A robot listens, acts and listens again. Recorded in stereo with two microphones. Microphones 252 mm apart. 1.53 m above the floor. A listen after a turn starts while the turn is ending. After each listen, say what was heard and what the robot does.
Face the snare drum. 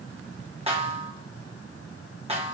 The snare drum: about 25° right or 155° right. Turn 25° right.
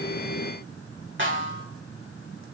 So it is at 130° right. Turn 130° right.
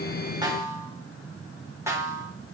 The snare drum is now 10° right. Turn 10° right.
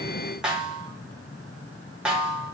Found it: a snare drum, straight ahead.